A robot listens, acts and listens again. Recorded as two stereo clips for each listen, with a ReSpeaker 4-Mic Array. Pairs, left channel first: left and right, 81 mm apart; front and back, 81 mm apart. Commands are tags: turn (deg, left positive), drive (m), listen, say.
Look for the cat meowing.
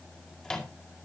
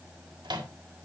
<listen/>
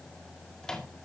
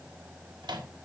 <listen/>
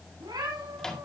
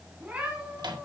<turn deg="-110"/>
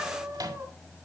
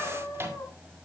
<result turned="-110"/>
<turn deg="-35"/>
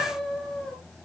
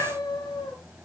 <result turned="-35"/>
<say>Found it: a cat meowing, straight ahead, 2 to 4 m away.</say>